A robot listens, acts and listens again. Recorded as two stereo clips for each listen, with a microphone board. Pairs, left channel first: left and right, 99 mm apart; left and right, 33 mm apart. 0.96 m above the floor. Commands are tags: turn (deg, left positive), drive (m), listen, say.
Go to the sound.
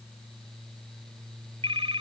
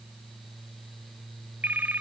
<turn deg="-75"/>
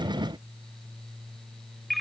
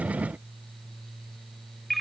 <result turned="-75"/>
<drive m="1.0"/>
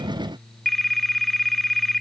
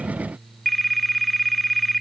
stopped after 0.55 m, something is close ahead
<say>Blocked. The phone ringing is further on, straight ahead.</say>